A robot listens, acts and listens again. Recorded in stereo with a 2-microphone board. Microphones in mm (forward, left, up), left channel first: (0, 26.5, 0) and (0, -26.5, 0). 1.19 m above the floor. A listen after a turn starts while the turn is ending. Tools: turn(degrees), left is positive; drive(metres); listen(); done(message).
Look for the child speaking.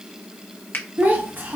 turn(degrees=-40)
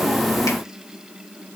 listen()
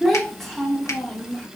done("Found it: a child speaking, straight ahead, 1 to 2 m away.")